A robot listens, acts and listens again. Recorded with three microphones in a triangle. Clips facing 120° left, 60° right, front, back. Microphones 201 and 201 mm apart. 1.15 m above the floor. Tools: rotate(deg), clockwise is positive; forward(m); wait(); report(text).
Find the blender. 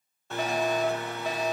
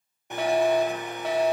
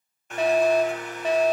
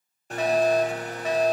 rotate(130)
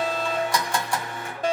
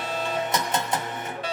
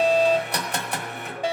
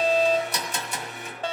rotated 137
report("Found it: a blender, straight ahead, 1 to 2 m away.")